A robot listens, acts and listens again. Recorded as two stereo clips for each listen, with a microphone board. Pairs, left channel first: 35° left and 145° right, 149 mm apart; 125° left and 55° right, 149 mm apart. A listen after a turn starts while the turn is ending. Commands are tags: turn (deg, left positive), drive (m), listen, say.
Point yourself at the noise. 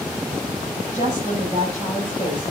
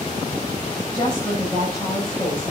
<turn deg="75"/>
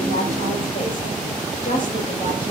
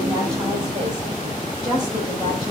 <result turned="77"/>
<say>Found it: a woman speaking, straight ahead.</say>